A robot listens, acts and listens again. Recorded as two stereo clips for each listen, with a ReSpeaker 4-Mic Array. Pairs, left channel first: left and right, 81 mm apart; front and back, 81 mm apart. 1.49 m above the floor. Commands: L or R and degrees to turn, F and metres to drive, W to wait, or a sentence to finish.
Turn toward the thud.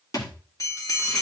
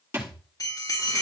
L125
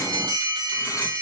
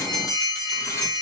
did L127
I heard a thud from this way, but can't make it out now.